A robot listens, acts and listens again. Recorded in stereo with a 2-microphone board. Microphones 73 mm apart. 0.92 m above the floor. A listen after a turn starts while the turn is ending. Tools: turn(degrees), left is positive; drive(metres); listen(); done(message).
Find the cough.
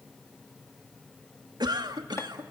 turn(degrees=-90)
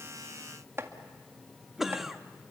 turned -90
done("Found it: a cough, straight ahead, 1 to 2 m away.")